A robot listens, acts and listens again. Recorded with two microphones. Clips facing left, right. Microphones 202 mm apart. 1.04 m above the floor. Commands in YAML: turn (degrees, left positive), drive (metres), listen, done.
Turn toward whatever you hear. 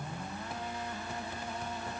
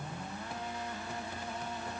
listen: true
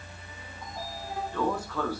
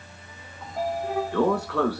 turn: -75
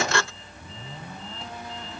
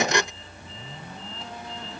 turn: -30
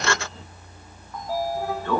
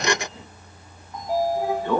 turn: -15
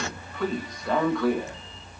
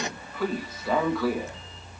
done: "Facing the sliding door."